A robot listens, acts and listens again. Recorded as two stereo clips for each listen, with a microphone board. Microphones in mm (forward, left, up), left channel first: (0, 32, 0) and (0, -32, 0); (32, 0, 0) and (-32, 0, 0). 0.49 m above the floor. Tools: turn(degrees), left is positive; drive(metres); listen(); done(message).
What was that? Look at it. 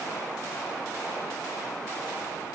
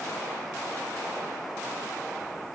listen()
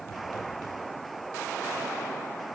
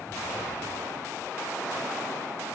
listen()
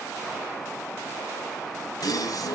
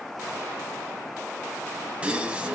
turn(degrees=105)
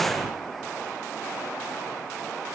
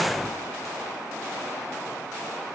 done("I heard a gasp from this way, but can't make it out now.")